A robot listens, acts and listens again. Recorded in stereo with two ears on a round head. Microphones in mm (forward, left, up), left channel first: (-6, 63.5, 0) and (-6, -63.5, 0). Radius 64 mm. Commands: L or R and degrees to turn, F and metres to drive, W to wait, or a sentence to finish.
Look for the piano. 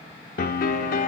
L65
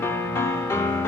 L20
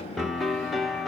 Found it: a piano, straight ahead.